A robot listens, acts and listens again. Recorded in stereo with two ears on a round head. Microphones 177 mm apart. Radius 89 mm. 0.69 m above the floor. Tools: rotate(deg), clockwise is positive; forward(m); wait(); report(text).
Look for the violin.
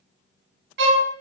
rotate(60)
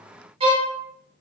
rotate(35)
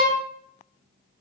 report("Facing the violin, under 1 m away.")